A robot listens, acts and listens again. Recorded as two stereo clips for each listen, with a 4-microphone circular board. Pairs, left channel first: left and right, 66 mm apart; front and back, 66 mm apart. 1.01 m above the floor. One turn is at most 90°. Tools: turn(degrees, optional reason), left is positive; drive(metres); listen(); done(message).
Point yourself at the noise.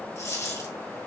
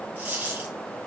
turn(degrees=90, reason="The dropped coin: 120° left.")
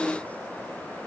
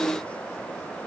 turn(degrees=30, reason="Nothing new. It was at 30° left.")
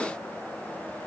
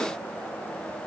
done("Facing where the dropped coin came from. I can't hear it now.")